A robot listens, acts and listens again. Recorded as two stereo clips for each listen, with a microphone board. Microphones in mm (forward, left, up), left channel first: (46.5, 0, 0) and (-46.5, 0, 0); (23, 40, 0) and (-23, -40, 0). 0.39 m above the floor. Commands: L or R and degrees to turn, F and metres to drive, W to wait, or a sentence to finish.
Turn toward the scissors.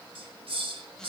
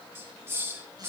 W
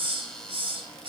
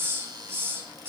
W
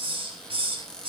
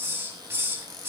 I can't make out scissors to turn to.